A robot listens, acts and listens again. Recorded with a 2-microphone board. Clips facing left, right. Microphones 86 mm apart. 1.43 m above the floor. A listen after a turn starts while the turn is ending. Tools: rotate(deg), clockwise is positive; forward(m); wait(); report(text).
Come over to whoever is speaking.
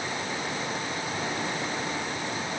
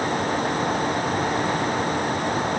wait()
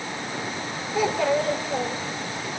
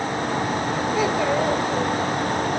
rotate(-30)
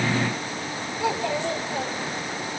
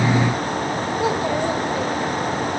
rotate(30)
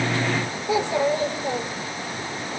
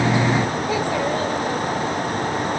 rotate(-15)
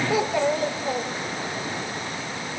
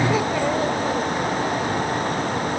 forward(1.0)
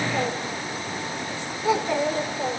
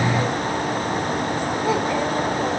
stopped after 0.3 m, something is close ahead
report("Something is in my way. I am facing the child speaking but have not reached it.")